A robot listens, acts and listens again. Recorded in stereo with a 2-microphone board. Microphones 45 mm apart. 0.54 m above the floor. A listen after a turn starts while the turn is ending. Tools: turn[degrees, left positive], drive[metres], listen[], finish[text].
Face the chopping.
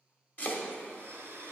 Thought: The chopping: about 40° left or 140° left.
Action: turn[40]
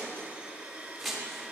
Action: finish[Found it: chopping, straight ahead, under 1 m away.]